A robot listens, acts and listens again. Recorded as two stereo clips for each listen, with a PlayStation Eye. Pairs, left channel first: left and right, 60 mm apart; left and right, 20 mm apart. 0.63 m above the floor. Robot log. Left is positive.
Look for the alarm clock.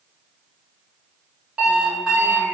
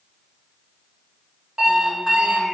cmd yaw -30
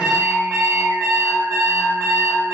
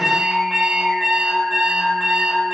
note: So it is at 135° right.
cmd yaw -135
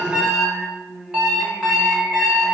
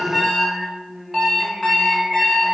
note: The alarm clock is now 10° right.
cmd yaw -10
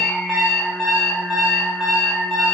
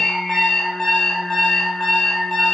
end: Found it: an alarm clock, straight ahead.